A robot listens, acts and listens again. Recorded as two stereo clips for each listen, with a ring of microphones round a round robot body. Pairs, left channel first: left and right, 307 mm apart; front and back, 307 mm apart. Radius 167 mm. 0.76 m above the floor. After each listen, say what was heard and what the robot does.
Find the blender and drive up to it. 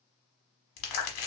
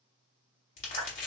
Keep listening.
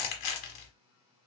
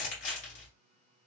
Keep listening.
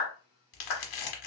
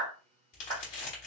I can't make out a blender, only a clap and crumpling.